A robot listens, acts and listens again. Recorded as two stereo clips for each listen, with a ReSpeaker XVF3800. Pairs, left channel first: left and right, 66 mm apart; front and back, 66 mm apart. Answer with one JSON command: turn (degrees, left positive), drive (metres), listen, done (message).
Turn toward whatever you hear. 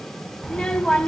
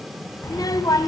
{"turn": 20}
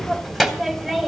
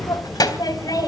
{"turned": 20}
{"done": "Found it: a child speaking, straight ahead."}